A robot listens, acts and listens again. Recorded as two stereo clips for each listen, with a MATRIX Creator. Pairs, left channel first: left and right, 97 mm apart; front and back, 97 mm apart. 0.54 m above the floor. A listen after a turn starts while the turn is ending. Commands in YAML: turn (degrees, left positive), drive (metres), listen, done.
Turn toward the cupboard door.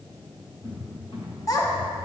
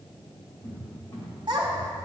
turn: 55
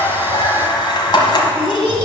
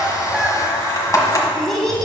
listen: true
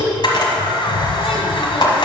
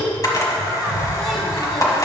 done: "Found it: a cupboard door, straight ahead, 2 to 4 m away."